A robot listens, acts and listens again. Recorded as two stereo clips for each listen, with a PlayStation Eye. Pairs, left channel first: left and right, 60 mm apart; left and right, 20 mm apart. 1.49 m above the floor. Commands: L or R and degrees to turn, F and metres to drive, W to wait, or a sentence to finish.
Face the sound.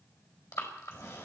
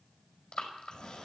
L70
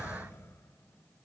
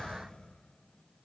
L45
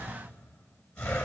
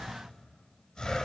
L20
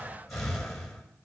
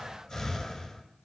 Found it: breathing, straight ahead.